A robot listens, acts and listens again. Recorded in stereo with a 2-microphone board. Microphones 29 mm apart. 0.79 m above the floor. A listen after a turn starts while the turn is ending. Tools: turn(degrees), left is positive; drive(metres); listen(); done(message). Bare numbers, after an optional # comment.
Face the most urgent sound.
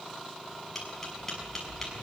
listen()
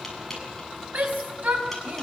# The shout: about 70° right or 110° right.
turn(-70)
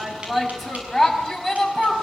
done("Facing the shout.")